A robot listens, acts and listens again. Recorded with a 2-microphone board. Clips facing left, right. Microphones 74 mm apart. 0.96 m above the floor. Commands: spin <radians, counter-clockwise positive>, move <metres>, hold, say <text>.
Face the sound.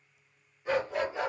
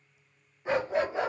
spin -0.44
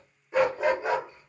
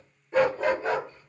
spin 0.26
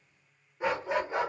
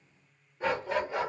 spin 0.44
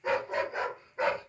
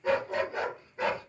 spin 0.52
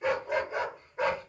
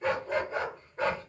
spin 0.17
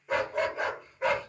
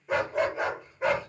say Found it: a dog barking, straight ahead.